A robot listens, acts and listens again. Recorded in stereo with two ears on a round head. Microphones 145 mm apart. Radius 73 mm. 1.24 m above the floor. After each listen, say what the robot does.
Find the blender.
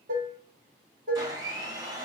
Turn 25° right.
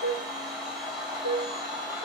Facing the blender, 1 to 2 m away.